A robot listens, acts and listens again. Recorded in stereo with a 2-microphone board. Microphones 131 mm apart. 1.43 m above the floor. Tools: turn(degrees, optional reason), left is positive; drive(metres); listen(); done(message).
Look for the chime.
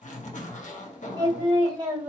listen()
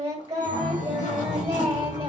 turn(degrees=-90)
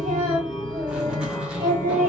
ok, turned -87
done("Facing the chime, 1 to 2 m away.")